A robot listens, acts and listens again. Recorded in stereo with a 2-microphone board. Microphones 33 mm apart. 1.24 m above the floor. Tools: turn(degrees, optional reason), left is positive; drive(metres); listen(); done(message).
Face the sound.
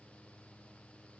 listen()
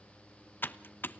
turn(degrees=90)
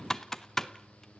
turn(degrees=15, reason="So it is at 15° left.")
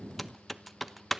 done("Facing the typing on a keyboard.")